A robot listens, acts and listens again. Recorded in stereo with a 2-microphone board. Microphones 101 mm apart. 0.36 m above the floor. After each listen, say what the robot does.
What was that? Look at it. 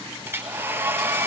Turn 20° right.
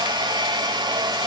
Turn 135° right.
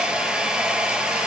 Turn 10° right.
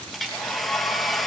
Found it: a hair dryer, straight ahead, 1 to 2 m away.